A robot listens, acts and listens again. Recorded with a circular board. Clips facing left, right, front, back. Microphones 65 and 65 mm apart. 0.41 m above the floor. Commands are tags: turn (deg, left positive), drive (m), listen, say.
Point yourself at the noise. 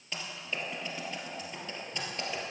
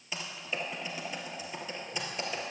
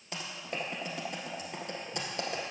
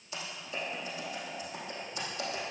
<turn deg="-10"/>
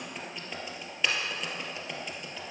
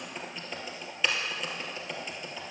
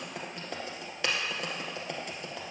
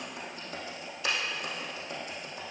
<say>Facing the typing on a keyboard, 2 to 4 m away.</say>